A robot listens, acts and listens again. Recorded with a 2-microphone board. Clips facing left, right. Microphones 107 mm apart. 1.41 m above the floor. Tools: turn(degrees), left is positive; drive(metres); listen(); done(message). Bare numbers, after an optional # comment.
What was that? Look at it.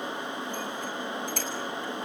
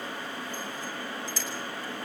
listen()
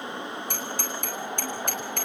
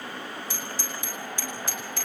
# The bicycle bell: about 55° left or 125° left.
turn(55)
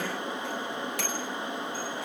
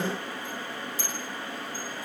# So it is at 70° left.
turn(70)
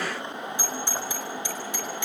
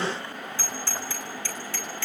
# The bicycle bell is now 15° left.
turn(15)
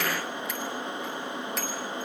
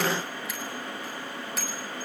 done("Facing the bicycle bell, over 4 m away.")